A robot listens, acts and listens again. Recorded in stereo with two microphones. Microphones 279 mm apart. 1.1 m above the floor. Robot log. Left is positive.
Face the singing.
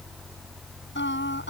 note: The singing: about 45° left or 135° left.
cmd yaw +45
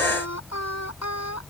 note: So it is at 95° left.
cmd yaw +95
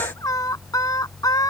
note: The singing is now 15° left.
cmd yaw +15
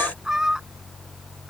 end: Facing the singing.